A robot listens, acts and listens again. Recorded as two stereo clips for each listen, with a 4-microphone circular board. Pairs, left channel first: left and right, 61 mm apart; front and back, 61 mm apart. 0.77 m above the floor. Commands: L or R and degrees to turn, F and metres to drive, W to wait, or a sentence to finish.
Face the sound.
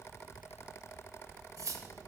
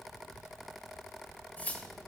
R65
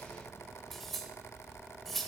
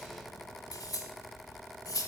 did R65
Found it: cutlery clinking, straight ahead, 1 to 2 m away.